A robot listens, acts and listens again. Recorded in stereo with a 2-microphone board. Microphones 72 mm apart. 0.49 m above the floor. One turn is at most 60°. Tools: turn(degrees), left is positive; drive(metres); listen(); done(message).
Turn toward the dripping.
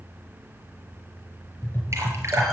turn(degrees=-40)
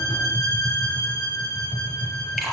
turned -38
done("Found it: dripping, straight ahead, over 4 m away.")